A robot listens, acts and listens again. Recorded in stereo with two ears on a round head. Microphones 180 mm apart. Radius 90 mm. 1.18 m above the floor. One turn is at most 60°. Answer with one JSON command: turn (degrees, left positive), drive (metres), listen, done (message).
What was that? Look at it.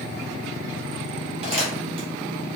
{"turn": -30}
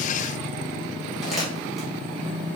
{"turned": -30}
{"done": "Facing the crumpling."}